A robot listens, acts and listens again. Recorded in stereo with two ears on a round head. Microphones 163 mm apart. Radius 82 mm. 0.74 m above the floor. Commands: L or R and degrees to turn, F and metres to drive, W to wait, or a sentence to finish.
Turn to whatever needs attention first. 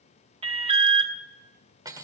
R30
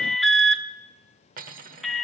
Facing the alarm.